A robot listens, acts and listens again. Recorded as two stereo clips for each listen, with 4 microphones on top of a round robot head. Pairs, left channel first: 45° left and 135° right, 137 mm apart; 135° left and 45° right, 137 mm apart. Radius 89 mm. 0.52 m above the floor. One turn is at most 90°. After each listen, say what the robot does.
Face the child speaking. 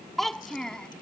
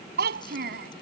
Turn 40° right.
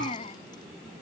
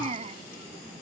Facing the child speaking.